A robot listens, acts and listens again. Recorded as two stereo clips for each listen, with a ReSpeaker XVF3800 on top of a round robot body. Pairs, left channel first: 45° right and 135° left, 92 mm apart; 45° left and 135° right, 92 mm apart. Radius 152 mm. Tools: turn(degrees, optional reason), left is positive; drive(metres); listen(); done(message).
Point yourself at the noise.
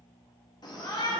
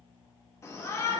turn(degrees=-10, reason="The shout: 10° right.")
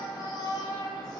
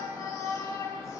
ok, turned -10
done("Found it: a shout, straight ahead.")